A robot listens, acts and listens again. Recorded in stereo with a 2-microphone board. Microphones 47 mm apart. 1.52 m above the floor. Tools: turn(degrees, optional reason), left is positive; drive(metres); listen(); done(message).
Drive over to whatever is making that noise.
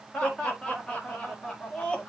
turn(degrees=20, reason="The laughter: about 20° left or 160° left.")
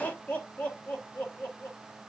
turn(degrees=140, reason="So it is at 140° left.")
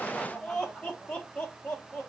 turn(degrees=20, reason="The laughter is now 20° left.")
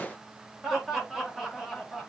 drive(metres=1.0)
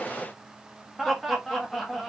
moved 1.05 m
drive(metres=1.0)
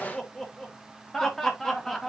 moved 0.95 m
turn(degrees=10, reason="The laughter is now 10° left.")
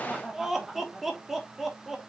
drive(metres=1.0)
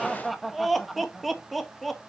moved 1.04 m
drive(metres=1.0)
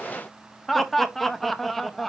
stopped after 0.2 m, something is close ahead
done("Arrived at the laughter, straight ahead.")